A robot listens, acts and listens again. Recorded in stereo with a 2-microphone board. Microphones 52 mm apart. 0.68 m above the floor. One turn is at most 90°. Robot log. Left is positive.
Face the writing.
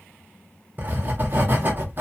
note: The writing: about 40° right or 140° right.
cmd yaw -40
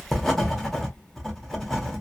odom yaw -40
end: Found it: writing, straight ahead, under 1 m away.